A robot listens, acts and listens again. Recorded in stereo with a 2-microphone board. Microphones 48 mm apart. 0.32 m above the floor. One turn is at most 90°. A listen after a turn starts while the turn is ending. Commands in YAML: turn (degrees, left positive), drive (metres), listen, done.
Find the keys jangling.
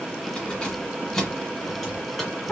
turn: 30
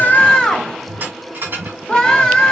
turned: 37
turn: -50
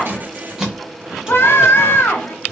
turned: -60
turn: -15
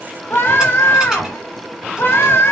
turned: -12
listen: true
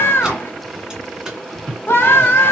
turn: -15
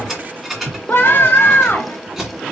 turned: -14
done: "Found it: keys jangling, straight ahead, 2 to 4 m away."